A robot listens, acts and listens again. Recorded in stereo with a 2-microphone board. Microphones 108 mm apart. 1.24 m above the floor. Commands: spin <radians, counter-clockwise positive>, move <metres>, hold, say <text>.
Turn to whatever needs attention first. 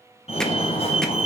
spin 1.22
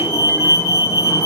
spin 0.52
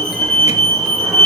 say Facing the fire alarm, 2 to 4 m away.